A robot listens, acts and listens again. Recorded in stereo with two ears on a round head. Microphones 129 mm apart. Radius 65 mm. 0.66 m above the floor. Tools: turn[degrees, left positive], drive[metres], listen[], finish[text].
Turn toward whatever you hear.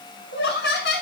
Action: turn[90]
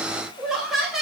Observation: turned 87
Action: finish[Found it: laughter, straight ahead, over 4 m away.]